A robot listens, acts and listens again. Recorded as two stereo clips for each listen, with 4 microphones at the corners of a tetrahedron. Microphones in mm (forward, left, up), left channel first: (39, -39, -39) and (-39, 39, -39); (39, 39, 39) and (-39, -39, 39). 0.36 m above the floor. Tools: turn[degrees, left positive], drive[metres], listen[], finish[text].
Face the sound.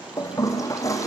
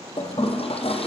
Thought: The toilet flushing: 15° left.
Action: turn[15]
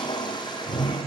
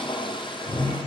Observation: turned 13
Action: finish[Found it: a toilet flushing, straight ahead, 2 to 4 m away.]